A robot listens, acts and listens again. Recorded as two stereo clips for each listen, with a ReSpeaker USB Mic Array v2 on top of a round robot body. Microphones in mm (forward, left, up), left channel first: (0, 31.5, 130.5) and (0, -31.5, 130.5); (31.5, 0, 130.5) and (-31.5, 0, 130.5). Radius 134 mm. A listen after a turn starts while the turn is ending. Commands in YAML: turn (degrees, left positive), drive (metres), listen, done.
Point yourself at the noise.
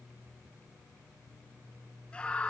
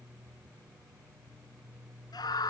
turn: 15
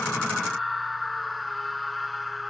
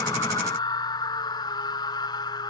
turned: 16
done: "Found it: a scream, straight ahead."